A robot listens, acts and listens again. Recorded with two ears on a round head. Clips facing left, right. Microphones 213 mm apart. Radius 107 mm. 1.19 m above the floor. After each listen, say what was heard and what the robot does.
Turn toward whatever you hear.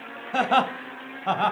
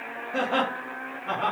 The laughter: about 75° left or 105° left. Turn 75° left.
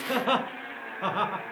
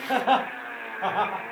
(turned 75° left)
So it is at 30° left. Turn 30° left.
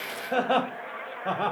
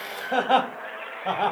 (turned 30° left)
Found it: laughter, straight ahead.